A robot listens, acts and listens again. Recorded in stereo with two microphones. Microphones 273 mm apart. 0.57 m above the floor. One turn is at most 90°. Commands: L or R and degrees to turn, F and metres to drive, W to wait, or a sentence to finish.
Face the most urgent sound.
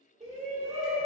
R25
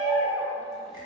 Facing the shout, 1 to 2 m away.